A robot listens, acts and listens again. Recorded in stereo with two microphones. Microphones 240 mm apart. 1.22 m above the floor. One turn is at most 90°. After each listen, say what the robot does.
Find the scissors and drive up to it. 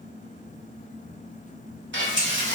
Turn 55° left.
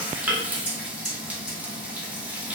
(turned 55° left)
Turn 60° left.
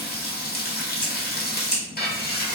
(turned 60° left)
Drive 1.0 m forward.
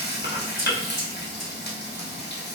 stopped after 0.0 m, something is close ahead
Keep listening.
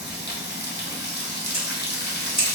Blocked. The scissors is further on, straight ahead.